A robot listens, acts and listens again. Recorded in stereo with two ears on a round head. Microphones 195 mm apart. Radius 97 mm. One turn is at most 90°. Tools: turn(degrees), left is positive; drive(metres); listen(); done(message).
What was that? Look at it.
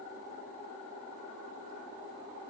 listen()
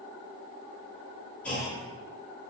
turn(degrees=30)
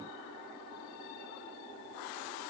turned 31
listen()
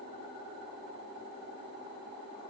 done("I heard a clunk, but can't make it out now. It was about 25° right or 145° left.")